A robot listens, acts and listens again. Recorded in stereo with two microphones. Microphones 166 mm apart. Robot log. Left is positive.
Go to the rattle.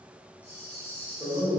cmd yaw -30
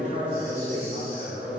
cmd idle
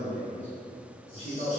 cmd idle
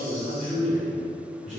end: I heard a rattle, but can't make it out now. It was about 20° left or 140° right. I did not reach it.